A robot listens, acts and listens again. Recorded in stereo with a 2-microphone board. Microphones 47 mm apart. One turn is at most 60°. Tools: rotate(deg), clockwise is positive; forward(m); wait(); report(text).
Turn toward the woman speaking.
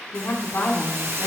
rotate(-60)
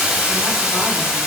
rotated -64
wait()
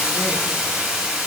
wait()
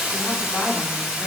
report("I heard a woman speaking, but can't make it out now. It was about straight ahead or 55° left.")